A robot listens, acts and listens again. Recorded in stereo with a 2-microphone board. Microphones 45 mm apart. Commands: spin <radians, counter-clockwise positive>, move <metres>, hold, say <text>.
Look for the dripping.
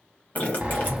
spin 0.70
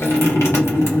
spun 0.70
spin 1.66
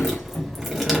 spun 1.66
say Facing the dripping, 1 to 2 m away.